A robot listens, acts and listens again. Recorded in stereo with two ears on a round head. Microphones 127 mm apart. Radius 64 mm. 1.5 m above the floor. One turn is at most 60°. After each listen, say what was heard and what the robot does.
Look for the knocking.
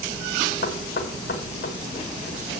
Turn 60° left.
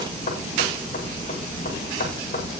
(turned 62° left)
So it is at 40° left. Turn 40° left.
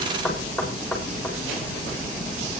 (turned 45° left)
Facing the knocking.